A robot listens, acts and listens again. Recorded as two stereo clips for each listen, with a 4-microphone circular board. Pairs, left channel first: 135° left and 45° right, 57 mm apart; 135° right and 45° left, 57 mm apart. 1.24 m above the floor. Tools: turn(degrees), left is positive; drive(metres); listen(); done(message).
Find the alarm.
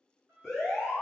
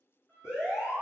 turn(degrees=-135)
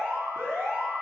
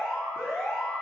turn(degrees=-45)
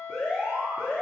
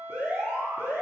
done("Found it: an alarm, straight ahead.")